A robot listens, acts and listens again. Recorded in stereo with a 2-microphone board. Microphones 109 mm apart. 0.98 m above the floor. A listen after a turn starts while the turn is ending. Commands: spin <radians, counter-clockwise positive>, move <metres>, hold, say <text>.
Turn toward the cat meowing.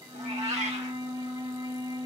spin -1.57
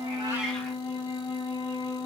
hold
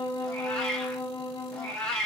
spin 0.17
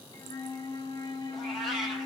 say Facing the cat meowing, 1 to 2 m away.